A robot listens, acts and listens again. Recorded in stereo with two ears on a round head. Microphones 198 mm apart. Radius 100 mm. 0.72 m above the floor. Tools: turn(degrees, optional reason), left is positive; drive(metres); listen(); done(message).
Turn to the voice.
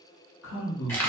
turn(degrees=60, reason="The man speaking: about 60° left or 120° left.")
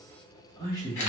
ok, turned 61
turn(degrees=20, reason="So it is at 20° left.")
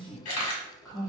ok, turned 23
done("Facing the man speaking.")